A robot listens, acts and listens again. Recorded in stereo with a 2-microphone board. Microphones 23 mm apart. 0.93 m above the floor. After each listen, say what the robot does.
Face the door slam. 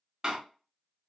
Turn 30° right.
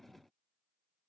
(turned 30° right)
Keep listening.
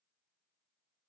I heard a door slam, but can't make it out now. It was about straight ahead or 120° right.